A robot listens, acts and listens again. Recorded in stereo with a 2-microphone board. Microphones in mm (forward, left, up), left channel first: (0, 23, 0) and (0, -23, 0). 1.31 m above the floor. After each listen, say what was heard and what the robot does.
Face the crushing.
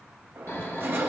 The crushing: about 55° right or 125° right. Turn 55° right.
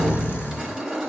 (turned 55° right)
So it is at 15° right. Turn 15° right.
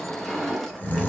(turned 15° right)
Facing the crushing, 1 to 2 m away.